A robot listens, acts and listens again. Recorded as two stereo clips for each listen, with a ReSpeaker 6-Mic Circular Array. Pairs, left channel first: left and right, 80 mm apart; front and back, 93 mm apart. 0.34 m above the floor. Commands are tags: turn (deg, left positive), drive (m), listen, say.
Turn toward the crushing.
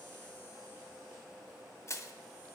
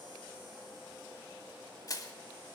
<turn deg="45"/>
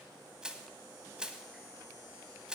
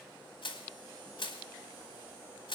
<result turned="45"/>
<turn deg="-10"/>
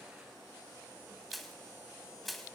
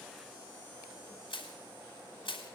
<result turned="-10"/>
<say>Facing the crushing, 1 to 2 m away.</say>